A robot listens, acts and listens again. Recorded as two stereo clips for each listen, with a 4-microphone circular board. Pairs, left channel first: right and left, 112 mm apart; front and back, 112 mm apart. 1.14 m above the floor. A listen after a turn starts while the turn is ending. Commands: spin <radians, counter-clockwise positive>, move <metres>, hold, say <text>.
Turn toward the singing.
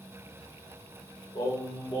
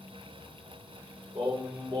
spin -2.36
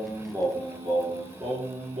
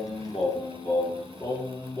spin 1.13
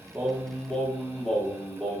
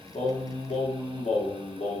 say Facing the singing.